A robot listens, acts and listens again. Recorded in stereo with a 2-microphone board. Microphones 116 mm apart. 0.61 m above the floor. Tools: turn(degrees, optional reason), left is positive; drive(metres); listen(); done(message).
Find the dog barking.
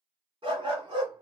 turn(degrees=-45, reason="The dog barking: about 45° right or 135° right.")
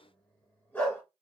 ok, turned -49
turn(degrees=20, reason="So it is at 20° left.")
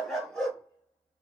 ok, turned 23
done("Facing the dog barking, 2 to 4 m away.")